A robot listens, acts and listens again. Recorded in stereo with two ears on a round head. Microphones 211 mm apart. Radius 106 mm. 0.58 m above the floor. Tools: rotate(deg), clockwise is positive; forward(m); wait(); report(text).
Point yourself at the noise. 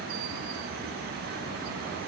wait()
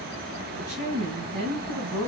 rotate(90)
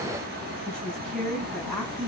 report("Facing the woman speaking.")